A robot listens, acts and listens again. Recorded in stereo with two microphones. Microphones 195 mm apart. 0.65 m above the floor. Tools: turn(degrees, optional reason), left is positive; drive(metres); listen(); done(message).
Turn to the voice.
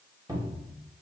listen()
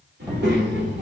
turn(degrees=-65, reason="The child speaking: about 65° right or 115° right.")
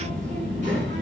turn(degrees=-40, reason="So it is at 40° right.")
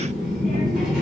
done("Facing the child speaking, 1 to 2 m away.")